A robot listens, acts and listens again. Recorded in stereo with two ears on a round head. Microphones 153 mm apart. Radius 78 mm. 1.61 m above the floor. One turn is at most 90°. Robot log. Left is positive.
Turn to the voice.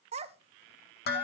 note: The child speaking: about 40° right or 140° right.
cmd yaw -40
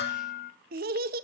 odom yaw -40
note: So it is at 95° right.
cmd yaw -90
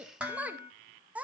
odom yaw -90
note: The child speaking is now 10° right.
cmd yaw -10
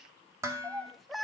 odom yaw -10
end: Found it: a child speaking, straight ahead, under 1 m away.